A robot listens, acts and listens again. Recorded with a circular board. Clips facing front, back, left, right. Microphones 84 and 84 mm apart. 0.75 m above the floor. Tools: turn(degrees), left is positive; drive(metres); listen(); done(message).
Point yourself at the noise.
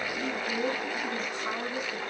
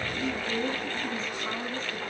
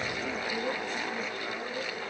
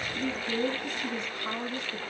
turn(degrees=-80)
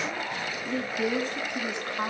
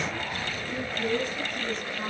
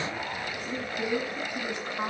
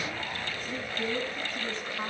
turn(degrees=20)
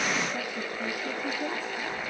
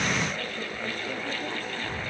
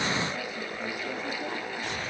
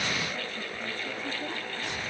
listen()
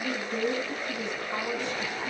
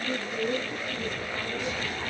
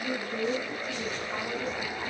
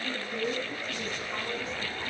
done("Facing the woman speaking, over 4 m away.")